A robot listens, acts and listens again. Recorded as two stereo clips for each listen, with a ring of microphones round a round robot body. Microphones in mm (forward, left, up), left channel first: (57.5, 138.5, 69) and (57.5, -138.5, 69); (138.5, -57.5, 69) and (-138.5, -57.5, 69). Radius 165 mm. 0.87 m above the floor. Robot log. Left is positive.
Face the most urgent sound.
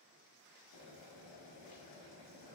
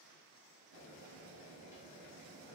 cmd idle
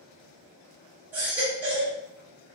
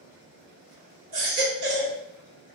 note: The baby crying: 175° right.
cmd yaw -175
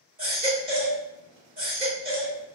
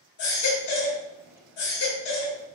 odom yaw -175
note: The baby crying is now 30° right.
cmd yaw -30
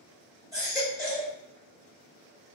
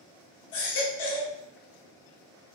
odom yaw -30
note: The baby crying is now 10° right.
cmd yaw -10
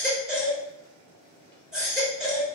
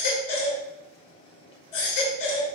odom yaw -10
end: Found it: a baby crying, straight ahead, 1 to 2 m away.